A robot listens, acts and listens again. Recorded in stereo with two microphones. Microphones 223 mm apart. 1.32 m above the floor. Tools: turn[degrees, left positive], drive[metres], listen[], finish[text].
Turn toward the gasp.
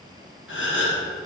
Thought: The gasp: about 60° left or 120° left.
Action: turn[60]
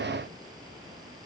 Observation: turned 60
Action: listen[]
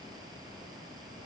Action: finish[I heard a gasp, but can't make it out now. It was about straight ahead or 60° left.]